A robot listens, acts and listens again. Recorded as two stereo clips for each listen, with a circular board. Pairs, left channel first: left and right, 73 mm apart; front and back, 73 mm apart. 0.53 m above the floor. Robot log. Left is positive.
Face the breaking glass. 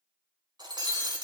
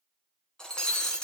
note: The breaking glass: 80° right.
cmd yaw -80
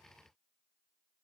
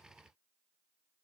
end: Facing where the breaking glass came from. I can't hear it now.